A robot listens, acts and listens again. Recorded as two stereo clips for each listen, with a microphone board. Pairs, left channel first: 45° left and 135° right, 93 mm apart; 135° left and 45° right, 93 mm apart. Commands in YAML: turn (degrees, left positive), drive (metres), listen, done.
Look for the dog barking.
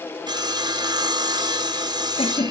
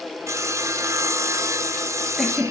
listen: true
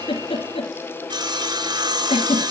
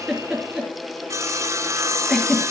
listen: true
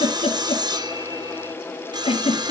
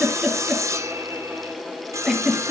done: "I can't make out a dog barking to turn to."